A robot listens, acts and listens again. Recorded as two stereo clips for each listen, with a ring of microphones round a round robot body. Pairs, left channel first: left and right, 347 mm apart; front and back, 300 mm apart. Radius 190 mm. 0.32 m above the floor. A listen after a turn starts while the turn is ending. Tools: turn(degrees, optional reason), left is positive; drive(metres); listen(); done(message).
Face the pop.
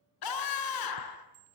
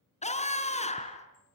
listen()
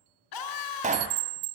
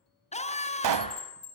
turn(degrees=-160, reason="The pop: 160° right.")
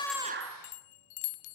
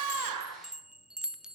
done("I heard a pop from this way, but can't make it out now.")